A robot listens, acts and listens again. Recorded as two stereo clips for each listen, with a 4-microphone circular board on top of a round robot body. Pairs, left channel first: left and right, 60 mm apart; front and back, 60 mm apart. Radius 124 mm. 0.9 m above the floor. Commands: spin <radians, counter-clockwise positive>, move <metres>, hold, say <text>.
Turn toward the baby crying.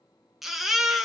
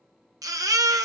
spin 3.14
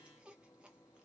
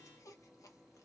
hold
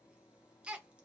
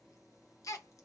spin -0.35
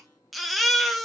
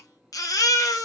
say Found it: a baby crying, straight ahead, under 1 m away.